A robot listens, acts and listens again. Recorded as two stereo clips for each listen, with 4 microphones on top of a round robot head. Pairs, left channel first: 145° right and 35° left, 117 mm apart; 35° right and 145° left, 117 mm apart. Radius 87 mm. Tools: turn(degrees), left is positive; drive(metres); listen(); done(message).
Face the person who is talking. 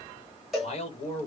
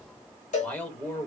turn(degrees=-120)
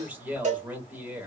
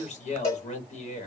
turn(degrees=-40)
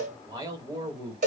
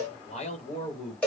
turn(degrees=-25)
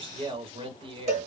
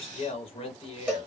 done("Facing the man speaking, 1 to 2 m away.")